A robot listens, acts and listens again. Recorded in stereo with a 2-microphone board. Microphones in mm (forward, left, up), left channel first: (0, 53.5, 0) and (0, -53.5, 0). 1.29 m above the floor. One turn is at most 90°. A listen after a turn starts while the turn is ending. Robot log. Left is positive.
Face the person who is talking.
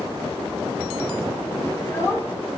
note: The child speaking: about 25° left or 155° left.
cmd yaw +25
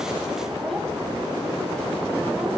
cmd idle
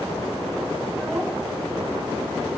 cmd idle
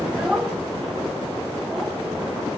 end: Found it: a child speaking, straight ahead.